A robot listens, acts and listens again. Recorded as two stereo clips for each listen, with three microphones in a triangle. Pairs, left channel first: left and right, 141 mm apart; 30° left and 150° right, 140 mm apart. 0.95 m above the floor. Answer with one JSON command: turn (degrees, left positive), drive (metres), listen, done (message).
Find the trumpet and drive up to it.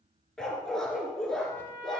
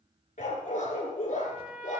{"turn": -75}
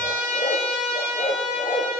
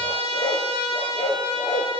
{"turn": -25}
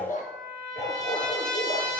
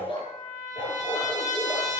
{"drive": 1.0}
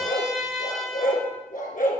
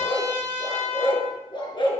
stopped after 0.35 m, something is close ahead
{"done": "Something is in my way. I am facing the trumpet but have not reached it."}